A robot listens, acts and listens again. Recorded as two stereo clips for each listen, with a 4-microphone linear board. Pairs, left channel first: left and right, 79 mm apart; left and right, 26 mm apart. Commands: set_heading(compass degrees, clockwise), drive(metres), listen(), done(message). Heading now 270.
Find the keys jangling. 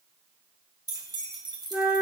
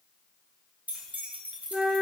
set_heading(335)
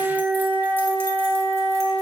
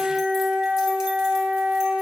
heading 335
listen()
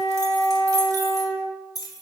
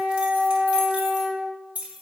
set_heading(35)
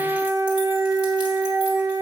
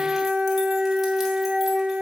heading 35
listen()
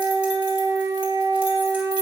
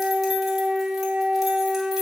listen()
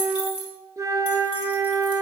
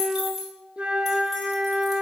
set_heading(50)
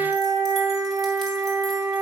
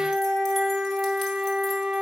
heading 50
listen()
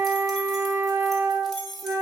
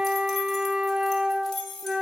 done("Found it: keys jangling, straight ahead.")